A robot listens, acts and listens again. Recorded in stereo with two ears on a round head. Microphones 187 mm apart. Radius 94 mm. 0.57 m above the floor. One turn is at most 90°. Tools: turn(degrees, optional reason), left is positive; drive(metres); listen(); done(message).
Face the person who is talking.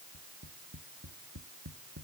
listen()
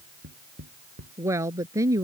turn(degrees=-15, reason="The woman speaking: about 15° right or 165° right.")
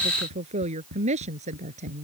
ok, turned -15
turn(degrees=-35, reason="The woman speaking: about 35° right or 145° right.")
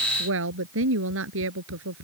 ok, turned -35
turn(degrees=-90, reason="So it is at 110° right.")
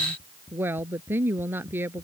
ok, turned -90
turn(degrees=-10, reason="The woman speaking is now 10° right.")
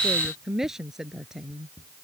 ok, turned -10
done("Found it: a woman speaking, straight ahead.")